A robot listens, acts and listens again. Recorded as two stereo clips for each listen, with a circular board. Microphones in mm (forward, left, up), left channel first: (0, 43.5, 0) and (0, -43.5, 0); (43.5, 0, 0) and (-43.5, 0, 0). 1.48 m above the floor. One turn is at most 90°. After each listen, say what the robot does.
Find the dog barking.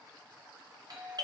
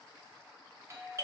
Keep listening.
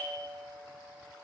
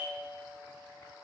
Keep listening.
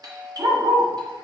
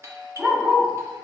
Turn 90° right.
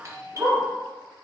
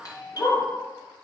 Turn 25° right.
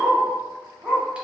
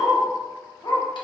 Turn 10° right.
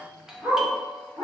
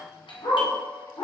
Facing the dog barking.